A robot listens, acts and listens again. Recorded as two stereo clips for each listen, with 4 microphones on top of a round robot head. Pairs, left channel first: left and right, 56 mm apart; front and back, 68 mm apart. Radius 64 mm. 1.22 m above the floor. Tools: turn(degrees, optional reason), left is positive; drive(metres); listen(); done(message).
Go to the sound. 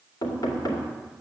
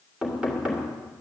turn(degrees=100, reason="The knocking: 100° left.")
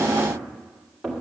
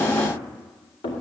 drive(metres=1.0)
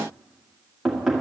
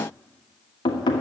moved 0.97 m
drive(metres=1.0)
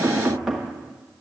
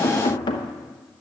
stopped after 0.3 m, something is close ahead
done("I am next to the knocking.")